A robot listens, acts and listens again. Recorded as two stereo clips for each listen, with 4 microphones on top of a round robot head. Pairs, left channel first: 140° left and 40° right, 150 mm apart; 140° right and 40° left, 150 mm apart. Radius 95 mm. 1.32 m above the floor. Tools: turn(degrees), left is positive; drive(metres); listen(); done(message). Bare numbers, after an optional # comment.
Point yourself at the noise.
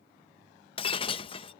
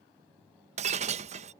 # The breaking glass: 85° left.
turn(85)
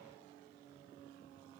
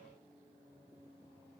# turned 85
done("Facing where the breaking glass came from. I can't hear it now.")